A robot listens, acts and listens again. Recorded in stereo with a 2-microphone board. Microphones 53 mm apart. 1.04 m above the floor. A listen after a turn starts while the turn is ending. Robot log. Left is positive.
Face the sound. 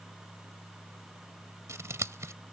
note: The scissors: about 65° right or 115° right.
cmd yaw -65
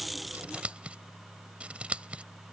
note: So it is at 25° right.
cmd yaw -25
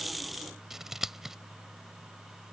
end: Facing the scissors.